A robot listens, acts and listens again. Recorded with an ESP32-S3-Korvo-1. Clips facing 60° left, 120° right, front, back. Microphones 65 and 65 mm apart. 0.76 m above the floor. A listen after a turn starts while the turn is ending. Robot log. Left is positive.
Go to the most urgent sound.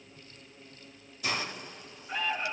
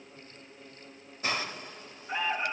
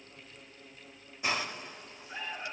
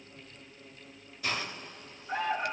note: The alarm: 175° left.
cmd yaw +175
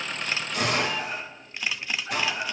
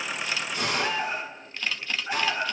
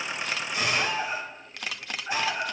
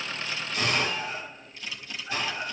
note: The alarm is now 45° right.
cmd yaw -45
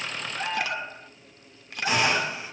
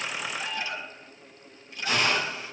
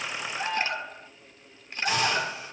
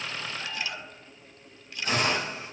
note: The alarm is now 15° left.
cmd yaw +15
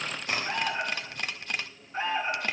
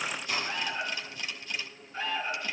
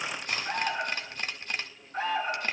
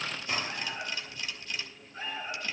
cmd fwd 1.0
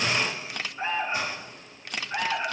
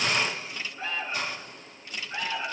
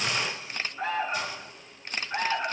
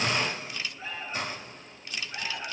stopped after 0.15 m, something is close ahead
note: The alarm is now 10° left.
cmd yaw +10
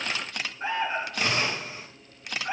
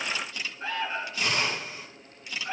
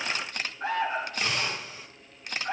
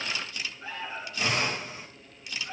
end: Something is in my way. I am facing the alarm but have not reached it.